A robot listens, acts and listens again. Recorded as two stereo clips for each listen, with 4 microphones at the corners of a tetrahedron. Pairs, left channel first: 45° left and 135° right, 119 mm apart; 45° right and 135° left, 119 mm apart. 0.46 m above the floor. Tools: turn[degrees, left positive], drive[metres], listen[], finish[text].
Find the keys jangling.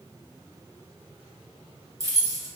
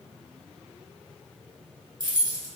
Thought: The keys jangling: 175° left.
Action: turn[175]
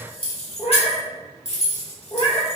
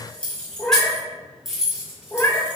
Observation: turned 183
Thought: The keys jangling is now 50° left.
Action: turn[50]
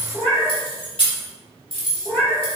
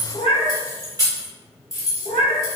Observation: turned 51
Thought: The keys jangling is now 15° left.
Action: turn[15]
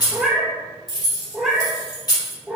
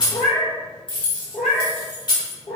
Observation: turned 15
Action: finish[Facing the keys jangling, 1 to 2 m away.]